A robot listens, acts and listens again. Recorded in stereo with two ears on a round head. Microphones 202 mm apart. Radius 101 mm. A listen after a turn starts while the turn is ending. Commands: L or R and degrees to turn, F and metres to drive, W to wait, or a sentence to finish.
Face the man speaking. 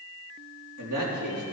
R75
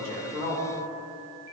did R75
R30
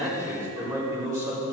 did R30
R15
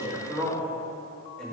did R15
Found it: a man speaking, straight ahead, over 4 m away.